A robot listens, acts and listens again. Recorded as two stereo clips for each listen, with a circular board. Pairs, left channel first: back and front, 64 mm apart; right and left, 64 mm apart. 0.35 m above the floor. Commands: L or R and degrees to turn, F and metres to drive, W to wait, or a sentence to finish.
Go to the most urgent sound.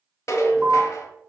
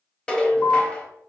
R85
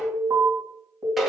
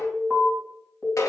R15
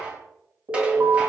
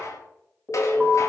F1.0
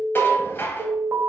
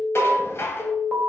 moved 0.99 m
F1.0
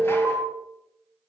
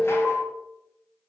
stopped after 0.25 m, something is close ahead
L15
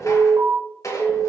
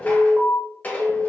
I am next to the alarm.